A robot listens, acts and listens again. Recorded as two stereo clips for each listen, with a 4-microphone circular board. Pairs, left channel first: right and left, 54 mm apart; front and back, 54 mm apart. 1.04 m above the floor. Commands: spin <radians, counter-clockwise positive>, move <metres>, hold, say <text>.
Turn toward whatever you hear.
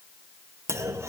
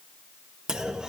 spin 1.83
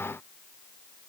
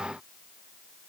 say Facing where the clunk came from. I can't hear it now.